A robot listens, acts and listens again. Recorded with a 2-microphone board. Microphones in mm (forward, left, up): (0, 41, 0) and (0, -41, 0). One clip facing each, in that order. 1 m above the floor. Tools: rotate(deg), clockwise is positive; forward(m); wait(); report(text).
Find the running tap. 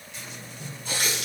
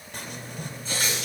rotate(-65)
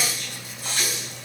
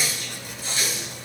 rotate(-55)
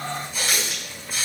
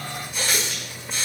report("Found it: a running tap, straight ahead.")